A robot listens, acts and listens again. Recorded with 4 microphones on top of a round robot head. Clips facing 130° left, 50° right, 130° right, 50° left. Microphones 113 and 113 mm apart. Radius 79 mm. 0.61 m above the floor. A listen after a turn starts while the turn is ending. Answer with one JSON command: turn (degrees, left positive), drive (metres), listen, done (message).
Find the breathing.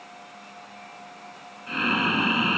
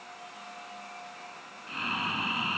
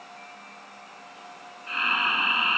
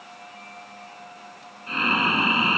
{"turn": 100}
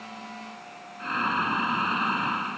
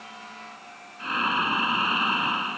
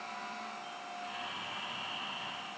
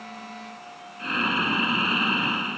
{"turn": 35}
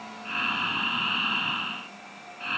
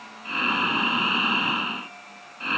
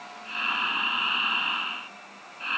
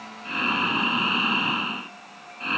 {"done": "Found it: breathing, straight ahead."}